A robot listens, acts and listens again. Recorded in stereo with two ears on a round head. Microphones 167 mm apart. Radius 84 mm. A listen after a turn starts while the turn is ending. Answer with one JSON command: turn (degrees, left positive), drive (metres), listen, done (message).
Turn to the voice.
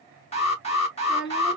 {"turn": 90}
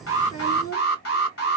{"turn": 15}
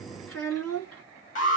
{"done": "Found it: a child speaking, straight ahead."}